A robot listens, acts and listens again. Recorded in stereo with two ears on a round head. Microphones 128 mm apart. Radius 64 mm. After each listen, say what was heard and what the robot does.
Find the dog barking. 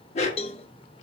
The dog barking: about 50° left or 130° left. Turn 50° left.
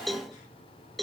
Keep listening.
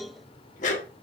So it is at 70° left. Turn 70° left.
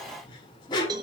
The dog barking is now 35° left. Turn 35° left.
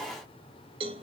Keep listening.
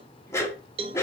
The dog barking is now 20° left. Turn 20° left.
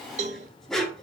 Facing the dog barking, 1 to 2 m away.